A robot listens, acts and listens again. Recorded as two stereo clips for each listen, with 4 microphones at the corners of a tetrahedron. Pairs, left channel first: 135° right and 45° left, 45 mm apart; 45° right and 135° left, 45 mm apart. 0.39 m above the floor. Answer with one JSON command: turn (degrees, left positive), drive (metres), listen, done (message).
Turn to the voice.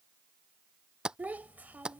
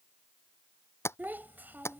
{"turn": 95}
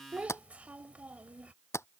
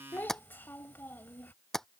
{"turn": -10}
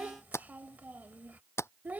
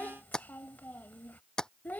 {"done": "Facing the child speaking."}